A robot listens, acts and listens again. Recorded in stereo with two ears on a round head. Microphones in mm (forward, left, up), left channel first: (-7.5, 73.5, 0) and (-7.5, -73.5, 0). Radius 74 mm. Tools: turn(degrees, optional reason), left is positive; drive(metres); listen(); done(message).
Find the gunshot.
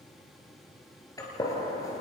turn(degrees=20, reason="The gunshot: about 20° left or 160° left.")
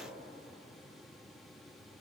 listen()
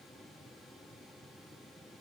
done("I heard a gunshot, but can't make it out now. It was about straight ahead or 140° left.")